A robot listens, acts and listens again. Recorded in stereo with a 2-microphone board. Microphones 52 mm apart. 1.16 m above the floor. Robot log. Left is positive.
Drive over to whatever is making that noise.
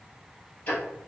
note: The ticking: about 40° left or 140° left.
cmd yaw +40
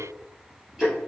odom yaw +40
cmd fwd 1.0
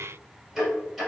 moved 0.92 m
cmd fwd 1.0
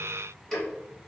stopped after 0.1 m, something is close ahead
end: I am next to the ticking.